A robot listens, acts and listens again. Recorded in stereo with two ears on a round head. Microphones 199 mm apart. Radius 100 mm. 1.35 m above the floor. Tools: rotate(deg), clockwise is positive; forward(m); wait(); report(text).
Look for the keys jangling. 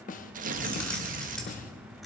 rotate(-30)
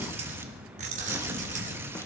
rotate(35)
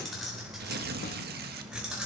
report("Found it: keys jangling, straight ahead.")